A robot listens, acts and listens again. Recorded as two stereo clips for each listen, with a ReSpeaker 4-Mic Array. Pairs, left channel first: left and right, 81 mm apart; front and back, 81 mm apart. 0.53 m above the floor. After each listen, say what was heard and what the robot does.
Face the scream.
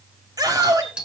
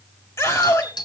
The scream: 45° right. Turn 45° right.
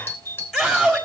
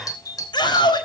Found it: a scream, straight ahead.